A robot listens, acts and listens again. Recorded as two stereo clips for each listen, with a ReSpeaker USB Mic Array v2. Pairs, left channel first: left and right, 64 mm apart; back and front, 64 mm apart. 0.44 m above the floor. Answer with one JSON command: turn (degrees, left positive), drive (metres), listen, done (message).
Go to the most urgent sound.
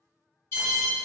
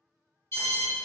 {"turn": 135}
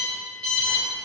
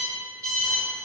{"turn": 25}
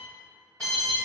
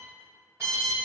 {"turn": 15}
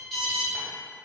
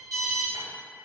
{"drive": 1.0}
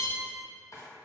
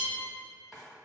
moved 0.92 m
{"listen": true}
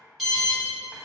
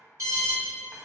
{"drive": 1.0}
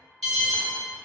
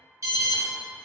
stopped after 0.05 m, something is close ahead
{"turn": 10}
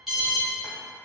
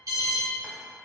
{"done": "Arrived at the alarm, straight ahead."}